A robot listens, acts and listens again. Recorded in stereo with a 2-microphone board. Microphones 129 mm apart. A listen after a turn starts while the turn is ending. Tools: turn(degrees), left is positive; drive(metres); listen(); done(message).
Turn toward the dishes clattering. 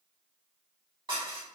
turn(degrees=-35)
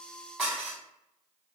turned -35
done("Facing the dishes clattering, 1 to 2 m away.")